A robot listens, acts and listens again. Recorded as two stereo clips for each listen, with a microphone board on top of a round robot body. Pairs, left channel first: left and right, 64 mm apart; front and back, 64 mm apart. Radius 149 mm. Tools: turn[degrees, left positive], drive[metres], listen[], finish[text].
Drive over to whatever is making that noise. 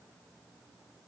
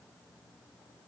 Action: listen[]
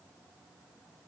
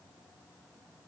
Action: listen[]
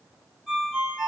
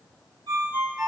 Thought: The ringtone: 175° right.
Action: turn[-175]
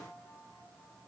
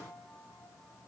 Action: listen[]
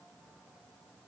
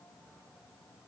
Action: listen[]
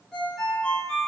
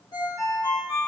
Thought: The ringtone is now 10° left.
Action: turn[10]
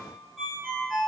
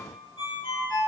Action: drive[1.0]
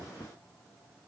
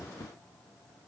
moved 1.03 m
Action: listen[]
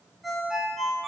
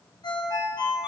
Action: drive[1.0]
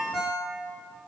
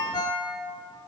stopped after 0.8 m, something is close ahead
Action: finish[I am next to the ringtone.]